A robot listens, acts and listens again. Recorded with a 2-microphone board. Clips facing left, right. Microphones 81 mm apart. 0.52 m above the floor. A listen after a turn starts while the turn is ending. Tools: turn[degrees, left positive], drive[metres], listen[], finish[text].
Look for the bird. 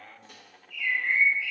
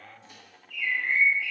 Thought: The bird: about 60° right or 120° right.
Action: turn[-60]
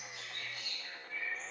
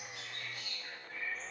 Thought: So it is at 55° right.
Action: turn[-55]
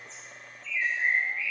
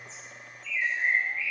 Thought: The bird is now 10° right.
Action: turn[-10]
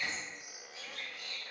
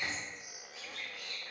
Action: finish[Facing the bird, 1 to 2 m away.]